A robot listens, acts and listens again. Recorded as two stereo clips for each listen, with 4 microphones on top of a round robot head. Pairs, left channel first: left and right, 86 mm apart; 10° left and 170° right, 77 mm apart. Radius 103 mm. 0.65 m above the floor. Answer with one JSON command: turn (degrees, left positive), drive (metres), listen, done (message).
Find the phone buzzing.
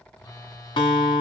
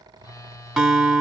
{"turn": 50}
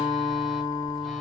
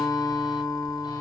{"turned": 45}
{"listen": true}
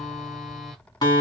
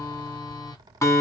{"listen": true}
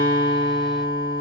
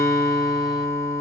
{"done": "I heard a phone buzzing from this way, but can't make it out now."}